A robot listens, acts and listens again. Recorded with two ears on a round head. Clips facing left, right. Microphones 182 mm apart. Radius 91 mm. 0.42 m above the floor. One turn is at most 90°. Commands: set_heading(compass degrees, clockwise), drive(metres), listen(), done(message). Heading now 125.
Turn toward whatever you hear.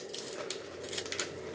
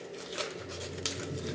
set_heading(165)
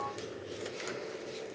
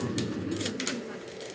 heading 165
set_heading(255)
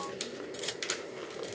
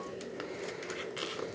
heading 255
set_heading(270)
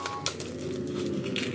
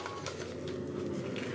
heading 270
set_heading(240)
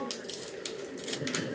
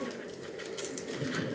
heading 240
done("Facing the laughter.")